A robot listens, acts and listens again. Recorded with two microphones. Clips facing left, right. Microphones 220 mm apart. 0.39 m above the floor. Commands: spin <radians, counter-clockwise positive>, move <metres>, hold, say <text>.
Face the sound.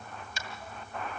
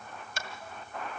spin -1.13
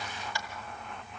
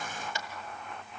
spin -0.44
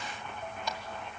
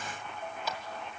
say Facing the tapping, 2 to 4 m away.